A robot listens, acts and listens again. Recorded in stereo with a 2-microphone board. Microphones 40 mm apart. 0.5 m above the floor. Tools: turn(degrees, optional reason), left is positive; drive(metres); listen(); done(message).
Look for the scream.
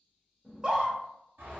turn(degrees=-25, reason="The scream: about 25° right or 155° right.")
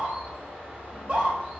turn(degrees=-125, reason="So it is at 125° right.")
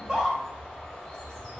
turn(degrees=-20, reason="The scream is now 20° right.")
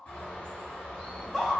done("Facing the scream.")